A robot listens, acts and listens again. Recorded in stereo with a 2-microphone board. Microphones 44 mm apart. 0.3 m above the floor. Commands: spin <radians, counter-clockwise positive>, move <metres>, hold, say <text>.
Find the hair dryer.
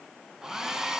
spin -0.52
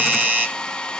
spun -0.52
spin 0.35
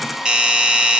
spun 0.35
say Found it: a hair dryer, straight ahead, 1 to 2 m away.